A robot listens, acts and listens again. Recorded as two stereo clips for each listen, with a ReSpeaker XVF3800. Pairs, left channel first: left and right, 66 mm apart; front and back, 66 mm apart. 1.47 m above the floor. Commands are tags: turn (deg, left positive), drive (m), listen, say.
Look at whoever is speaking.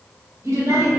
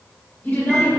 <turn deg="-50"/>
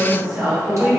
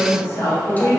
<turn deg="-10"/>
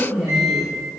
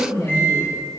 <say>Found it: a woman speaking, straight ahead.</say>